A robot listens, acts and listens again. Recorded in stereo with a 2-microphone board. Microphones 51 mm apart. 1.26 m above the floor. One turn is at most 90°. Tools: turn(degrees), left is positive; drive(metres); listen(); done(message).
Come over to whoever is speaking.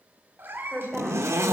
turn(degrees=30)
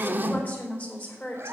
turn(degrees=90)
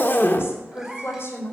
turn(degrees=50)
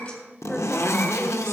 turn(degrees=10)
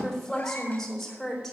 drive(metres=1.0)
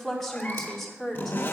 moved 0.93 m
drive(metres=1.0)
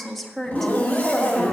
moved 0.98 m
drive(metres=1.0)
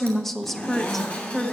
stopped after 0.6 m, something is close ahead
done("Arrived at the woman speaking, straight ahead.")